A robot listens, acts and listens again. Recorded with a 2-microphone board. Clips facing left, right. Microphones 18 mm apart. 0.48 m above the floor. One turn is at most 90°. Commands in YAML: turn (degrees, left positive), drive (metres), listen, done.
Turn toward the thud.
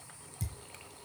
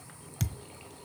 turn: -90
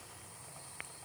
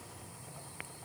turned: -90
done: "I heard a thud from this way, but can't make it out now."